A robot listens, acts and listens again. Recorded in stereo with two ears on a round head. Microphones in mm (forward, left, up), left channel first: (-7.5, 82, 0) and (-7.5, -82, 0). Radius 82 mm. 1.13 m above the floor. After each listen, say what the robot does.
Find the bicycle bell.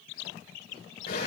Keep listening.
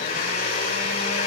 Keep listening.
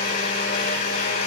I can't make out a bicycle bell, only a blender.